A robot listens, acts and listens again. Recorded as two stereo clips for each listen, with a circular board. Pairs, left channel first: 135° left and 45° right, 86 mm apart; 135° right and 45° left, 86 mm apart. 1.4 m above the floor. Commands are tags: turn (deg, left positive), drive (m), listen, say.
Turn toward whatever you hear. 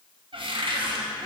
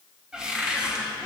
<turn deg="-35"/>
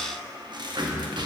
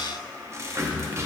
<turn deg="-10"/>
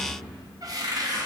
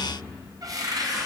<say>Facing the cupboard door.</say>